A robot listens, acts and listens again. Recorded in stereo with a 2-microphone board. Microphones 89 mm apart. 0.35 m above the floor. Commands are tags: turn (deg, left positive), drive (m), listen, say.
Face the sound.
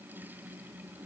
<listen/>
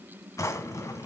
<turn deg="35"/>
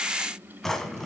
<say>Facing the drawer.</say>